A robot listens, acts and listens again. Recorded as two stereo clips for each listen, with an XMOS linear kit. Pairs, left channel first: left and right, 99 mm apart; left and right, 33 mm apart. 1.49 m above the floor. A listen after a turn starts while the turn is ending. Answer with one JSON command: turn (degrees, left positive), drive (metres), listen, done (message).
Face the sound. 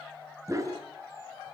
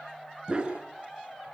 {"turn": -30}
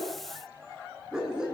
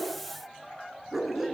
{"done": "Facing the dog barking, over 4 m away."}